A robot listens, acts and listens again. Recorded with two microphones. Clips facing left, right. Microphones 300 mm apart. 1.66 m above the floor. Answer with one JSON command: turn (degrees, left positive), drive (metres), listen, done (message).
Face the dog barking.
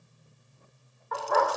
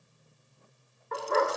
{"turn": -25}
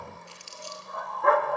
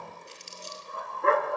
{"turn": -25}
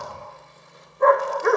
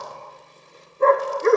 {"turn": -30}
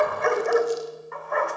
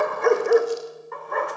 {"turn": -135}
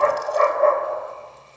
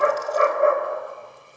{"turn": -15}
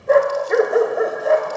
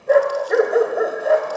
{"done": "Facing the dog barking, 2 to 4 m away."}